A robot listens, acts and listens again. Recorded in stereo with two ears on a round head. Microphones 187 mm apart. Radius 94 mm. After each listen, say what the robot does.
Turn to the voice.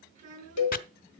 Turn 40° right.
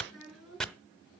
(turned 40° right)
Found it: a child speaking, straight ahead.